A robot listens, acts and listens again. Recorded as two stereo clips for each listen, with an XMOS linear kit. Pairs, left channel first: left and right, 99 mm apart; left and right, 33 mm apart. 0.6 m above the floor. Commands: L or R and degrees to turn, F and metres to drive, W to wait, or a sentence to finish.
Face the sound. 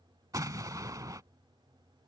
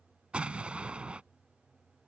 R40
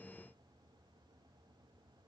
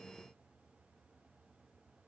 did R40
W
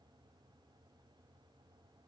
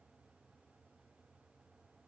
I heard an explosion, but can't make it out now. It was about straight ahead or 100° right.